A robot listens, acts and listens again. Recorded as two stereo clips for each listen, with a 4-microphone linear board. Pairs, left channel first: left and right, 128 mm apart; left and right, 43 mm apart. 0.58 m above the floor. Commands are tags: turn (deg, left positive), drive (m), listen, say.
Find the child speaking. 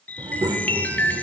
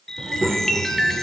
<turn deg="-30"/>
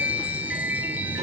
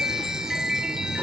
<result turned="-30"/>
<turn deg="-120"/>
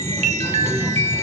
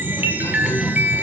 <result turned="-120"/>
<turn deg="-20"/>
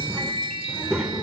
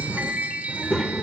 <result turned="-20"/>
<say>Facing the child speaking.</say>